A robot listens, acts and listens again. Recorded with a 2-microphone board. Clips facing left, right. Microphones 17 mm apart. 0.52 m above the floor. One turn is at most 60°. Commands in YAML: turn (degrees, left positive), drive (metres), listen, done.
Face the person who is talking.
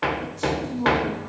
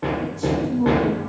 turn: -30
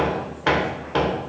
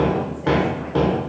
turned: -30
listen: true
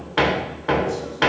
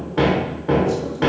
listen: true
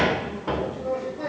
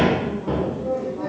done: "I heard a woman speaking, but can't make it out now. It was about 25° left or 145° right."